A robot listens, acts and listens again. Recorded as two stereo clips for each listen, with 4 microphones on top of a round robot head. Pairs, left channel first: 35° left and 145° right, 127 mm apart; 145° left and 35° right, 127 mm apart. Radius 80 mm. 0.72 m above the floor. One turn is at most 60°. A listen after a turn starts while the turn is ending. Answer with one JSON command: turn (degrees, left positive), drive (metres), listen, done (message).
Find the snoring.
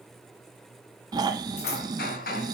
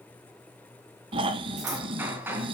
{"turn": -60}
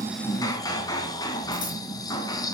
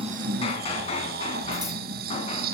{"turn": -30}
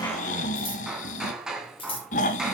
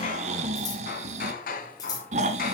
{"done": "Facing the snoring."}